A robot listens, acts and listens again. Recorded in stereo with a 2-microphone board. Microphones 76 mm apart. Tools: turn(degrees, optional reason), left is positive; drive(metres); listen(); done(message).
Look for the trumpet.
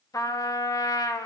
turn(degrees=50, reason="The trumpet: about 50° left or 130° left.")
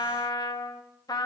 turn(degrees=70, reason="So it is at 70° left.")
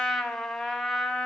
done("Found it: a trumpet, straight ahead.")